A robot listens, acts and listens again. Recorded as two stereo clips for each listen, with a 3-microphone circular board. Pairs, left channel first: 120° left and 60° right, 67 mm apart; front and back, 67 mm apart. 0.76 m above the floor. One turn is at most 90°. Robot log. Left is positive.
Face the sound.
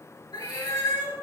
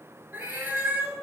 note: The cat meowing: 115° left.
cmd yaw +90
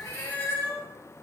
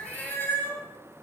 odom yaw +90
note: The cat meowing is now 60° left.
cmd yaw +60
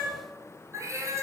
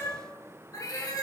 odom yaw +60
note: The cat meowing is now 20° right.
cmd yaw -20
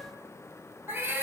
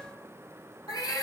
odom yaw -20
end: Facing the cat meowing.